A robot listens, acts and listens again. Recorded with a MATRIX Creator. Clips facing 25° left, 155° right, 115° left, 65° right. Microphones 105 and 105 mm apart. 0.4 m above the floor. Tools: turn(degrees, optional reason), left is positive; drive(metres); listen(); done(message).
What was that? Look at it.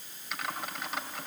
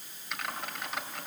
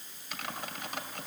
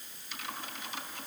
turn(degrees=110, reason="The typing on a keyboard: 110° left.")
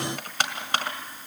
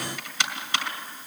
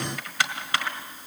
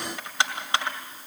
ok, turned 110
done("Facing the typing on a keyboard.")